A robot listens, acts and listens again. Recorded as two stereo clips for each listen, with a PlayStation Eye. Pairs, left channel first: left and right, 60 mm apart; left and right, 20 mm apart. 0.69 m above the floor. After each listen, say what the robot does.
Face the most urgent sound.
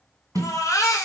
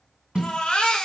Turn 90° left.
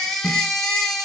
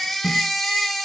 Facing the baby crying, 1 to 2 m away.